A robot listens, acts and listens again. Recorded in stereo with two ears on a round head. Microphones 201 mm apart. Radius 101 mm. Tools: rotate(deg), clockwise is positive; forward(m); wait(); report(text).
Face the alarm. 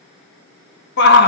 wait()
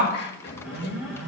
rotate(30)
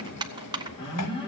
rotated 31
rotate(-20)
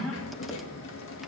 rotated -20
report("Found it: an alarm, straight ahead.")